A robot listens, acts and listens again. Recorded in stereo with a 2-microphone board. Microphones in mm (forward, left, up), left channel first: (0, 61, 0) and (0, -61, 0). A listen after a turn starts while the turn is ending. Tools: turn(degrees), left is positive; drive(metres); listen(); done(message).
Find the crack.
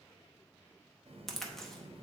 turn(degrees=30)
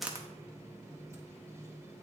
listen()
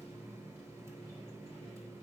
done("I heard a crack, but can't make it out now. It was about 30° right or 150° left.")